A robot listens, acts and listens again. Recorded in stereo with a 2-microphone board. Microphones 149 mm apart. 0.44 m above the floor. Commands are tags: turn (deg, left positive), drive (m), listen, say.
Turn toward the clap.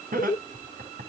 <listen/>
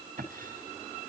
<listen/>
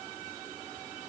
<say>I can't make out a clap to turn to.</say>